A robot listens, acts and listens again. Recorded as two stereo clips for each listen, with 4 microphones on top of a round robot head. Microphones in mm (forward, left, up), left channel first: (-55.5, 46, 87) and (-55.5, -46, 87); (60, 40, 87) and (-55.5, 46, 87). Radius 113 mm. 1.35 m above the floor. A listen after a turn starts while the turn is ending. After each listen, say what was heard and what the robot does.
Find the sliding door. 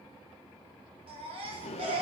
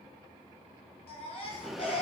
The sliding door: 90° left. Turn 90° left.
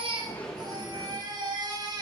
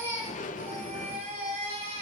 Found it: a sliding door, straight ahead, under 1 m away.